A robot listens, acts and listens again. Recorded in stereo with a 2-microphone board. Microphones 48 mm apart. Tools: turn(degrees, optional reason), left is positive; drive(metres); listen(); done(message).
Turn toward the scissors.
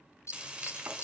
turn(degrees=70, reason="The scissors: about 70° left or 110° left.")
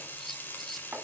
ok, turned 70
done("Found it: scissors, straight ahead.")